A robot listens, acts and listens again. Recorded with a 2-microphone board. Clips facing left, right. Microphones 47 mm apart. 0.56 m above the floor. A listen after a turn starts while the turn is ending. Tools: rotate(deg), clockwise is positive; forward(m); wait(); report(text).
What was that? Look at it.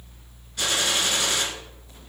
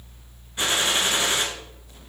rotate(25)
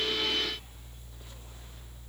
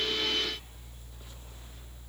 wait()
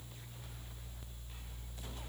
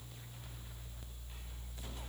report("I heard a gunshot, but can't make it out now. It was about straight ahead or 130° right.")